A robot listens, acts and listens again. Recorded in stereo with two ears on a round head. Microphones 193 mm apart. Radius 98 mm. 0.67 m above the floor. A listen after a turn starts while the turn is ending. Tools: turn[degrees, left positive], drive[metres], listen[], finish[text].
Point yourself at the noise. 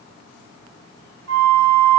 Action: turn[-90]
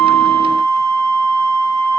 Thought: So it is at 15° right.
Action: turn[-15]
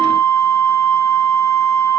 Action: finish[Facing the flute, under 1 m away.]